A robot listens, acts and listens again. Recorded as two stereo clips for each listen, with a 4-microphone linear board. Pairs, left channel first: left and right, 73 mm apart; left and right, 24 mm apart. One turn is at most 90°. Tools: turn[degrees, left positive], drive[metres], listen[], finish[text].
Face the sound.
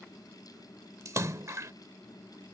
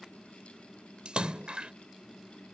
Thought: The splash: about 45° right or 135° right.
Action: turn[-45]
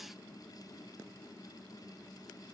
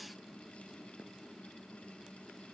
Action: listen[]
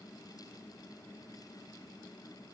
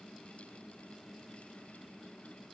Action: finish[I heard a splash, but can't make it out now. It was about straight ahead or 90° right.]